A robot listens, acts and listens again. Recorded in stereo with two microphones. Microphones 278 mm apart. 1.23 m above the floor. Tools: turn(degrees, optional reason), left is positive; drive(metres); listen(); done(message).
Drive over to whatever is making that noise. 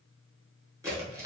turn(degrees=-30)
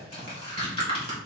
turn(degrees=20, reason="So it is at 20° left.")
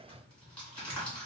drive(metres=1.0)
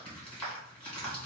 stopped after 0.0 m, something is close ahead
done("Something is in my way. I am facing the tearing paper but have not reached it.")